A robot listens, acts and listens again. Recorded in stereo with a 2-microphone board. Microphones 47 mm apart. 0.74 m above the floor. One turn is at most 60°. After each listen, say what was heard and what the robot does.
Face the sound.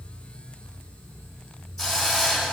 Turn 30° left.
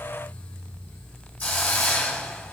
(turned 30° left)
So it is at 140° left. Turn 60° left.
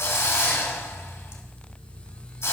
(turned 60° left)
The hiss is now 95° left. Turn 60° left.
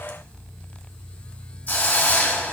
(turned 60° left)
The hiss is now 35° left. Turn 35° left.
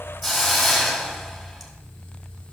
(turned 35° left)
Facing the hiss, 1 to 2 m away.